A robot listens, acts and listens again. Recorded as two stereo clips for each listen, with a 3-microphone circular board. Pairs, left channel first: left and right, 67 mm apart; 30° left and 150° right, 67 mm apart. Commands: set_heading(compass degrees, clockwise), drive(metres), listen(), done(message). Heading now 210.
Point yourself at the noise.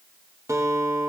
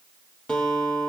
set_heading(255)
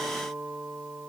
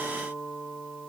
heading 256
done("Found it: a guitar, straight ahead, 2 to 4 m away.")